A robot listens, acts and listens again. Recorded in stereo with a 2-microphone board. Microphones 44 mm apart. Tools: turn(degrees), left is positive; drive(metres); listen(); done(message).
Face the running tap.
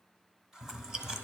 turn(degrees=-15)
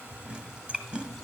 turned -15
listen()
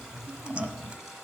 listen()
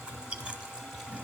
done("I heard a running tap, but can't make it out now. It was about straight ahead or 150° right.")